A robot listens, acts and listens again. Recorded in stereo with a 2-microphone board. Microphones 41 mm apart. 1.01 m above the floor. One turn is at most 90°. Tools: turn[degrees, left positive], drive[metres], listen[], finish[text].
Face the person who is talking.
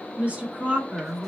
Thought: The woman speaking: about 35° right or 145° right.
Action: turn[-35]
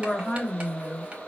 Action: finish[Found it: a woman speaking, straight ahead, 2 to 4 m away.]